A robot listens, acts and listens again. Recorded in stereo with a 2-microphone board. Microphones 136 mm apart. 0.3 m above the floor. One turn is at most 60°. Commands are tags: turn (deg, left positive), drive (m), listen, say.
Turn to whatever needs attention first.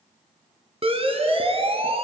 <turn deg="-45"/>
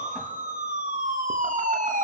<turn deg="-60"/>
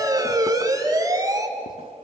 <turn deg="-25"/>
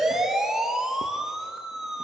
<say>Found it: a siren, straight ahead, 2 to 4 m away.</say>